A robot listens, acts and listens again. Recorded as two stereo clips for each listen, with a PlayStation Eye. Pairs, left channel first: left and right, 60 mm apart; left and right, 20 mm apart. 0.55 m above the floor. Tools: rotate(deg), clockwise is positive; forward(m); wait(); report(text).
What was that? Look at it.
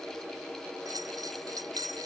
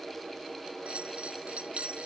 rotate(75)
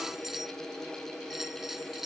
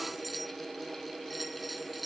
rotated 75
report("Facing the bell.")